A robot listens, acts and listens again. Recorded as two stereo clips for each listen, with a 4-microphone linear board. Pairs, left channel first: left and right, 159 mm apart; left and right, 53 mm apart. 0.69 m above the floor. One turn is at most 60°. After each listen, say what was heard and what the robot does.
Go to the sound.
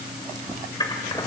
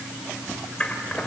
The scissors: about 25° left or 155° left. Turn 25° left.
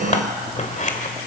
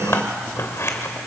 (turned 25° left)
So it is at 130° left. Turn 60° left.
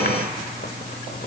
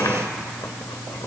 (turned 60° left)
Nothing new. It was at 70° left. Turn 60° left.
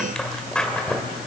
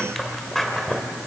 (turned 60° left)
Drive 1.0 m forward.
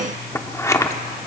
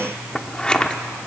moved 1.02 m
The scissors is now 20° left. Turn 20° left.
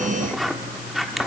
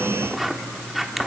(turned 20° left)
Drive 1.0 m forward.
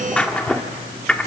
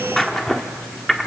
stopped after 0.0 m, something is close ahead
Arrived at the scissors, straight ahead.